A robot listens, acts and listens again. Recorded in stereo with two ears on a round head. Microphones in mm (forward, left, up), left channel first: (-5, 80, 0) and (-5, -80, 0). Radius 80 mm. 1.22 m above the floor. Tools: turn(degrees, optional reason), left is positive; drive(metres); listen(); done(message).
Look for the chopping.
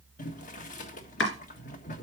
turn(degrees=75, reason="The chopping: about 75° left or 105° left.")
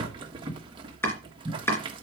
turn(degrees=15, reason="So it is at 15° left.")
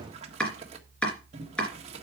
done("Facing the chopping, 2 to 4 m away.")